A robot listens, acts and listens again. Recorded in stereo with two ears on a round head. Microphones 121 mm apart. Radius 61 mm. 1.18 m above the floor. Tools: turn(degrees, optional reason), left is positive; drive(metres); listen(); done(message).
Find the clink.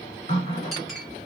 turn(degrees=30)
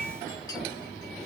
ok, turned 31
listen()
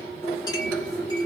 listen()
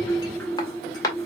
turn(degrees=150, reason="So it is at 150° left.")
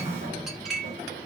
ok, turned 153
done("Facing the clink.")